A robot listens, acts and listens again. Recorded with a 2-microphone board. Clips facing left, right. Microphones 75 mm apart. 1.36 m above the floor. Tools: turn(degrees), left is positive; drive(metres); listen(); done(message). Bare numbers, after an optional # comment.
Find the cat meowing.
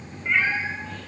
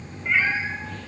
turn(-30)
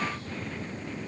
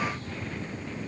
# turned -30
listen()
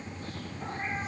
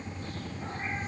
listen()
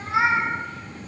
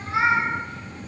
# So it is at 25° left.
turn(25)
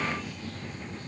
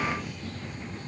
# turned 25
listen()
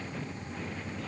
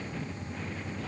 listen()
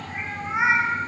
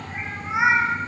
# The cat meowing is now 10° right.
turn(-10)
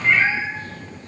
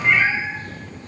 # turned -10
done("Found it: a cat meowing, straight ahead, 1 to 2 m away.")